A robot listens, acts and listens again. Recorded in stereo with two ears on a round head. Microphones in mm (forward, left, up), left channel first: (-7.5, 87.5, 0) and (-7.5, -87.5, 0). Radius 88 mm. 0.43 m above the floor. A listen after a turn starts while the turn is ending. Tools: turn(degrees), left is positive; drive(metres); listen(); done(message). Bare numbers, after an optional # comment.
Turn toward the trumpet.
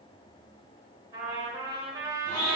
# The trumpet: about 15° right or 165° right.
turn(-15)
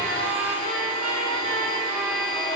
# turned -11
listen()
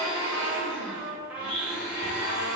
done("Facing the trumpet, under 1 m away.")